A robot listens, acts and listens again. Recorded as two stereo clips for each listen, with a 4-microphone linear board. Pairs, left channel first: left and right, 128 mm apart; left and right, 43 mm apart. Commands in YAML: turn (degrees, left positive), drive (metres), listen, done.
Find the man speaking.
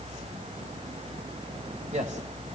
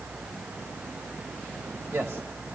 turn: -65
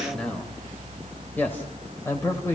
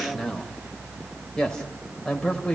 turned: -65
turn: 20
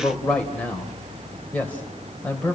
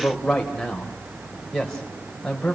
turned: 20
turn: 10
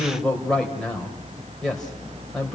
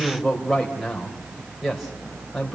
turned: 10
done: "Found it: a man speaking, straight ahead, 2 to 4 m away."